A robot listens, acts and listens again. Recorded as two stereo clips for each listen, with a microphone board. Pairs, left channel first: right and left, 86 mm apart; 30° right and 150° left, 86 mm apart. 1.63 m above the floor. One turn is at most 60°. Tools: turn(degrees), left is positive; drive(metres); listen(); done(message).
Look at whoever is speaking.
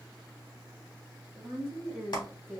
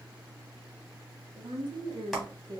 turn(degrees=60)
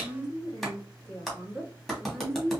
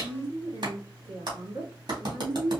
turn(degrees=60)
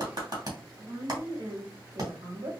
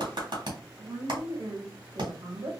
turn(degrees=60)
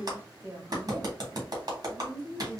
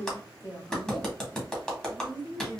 turn(degrees=30)
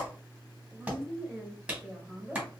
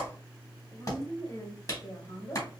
done("Facing the woman speaking, 2 to 4 m away.")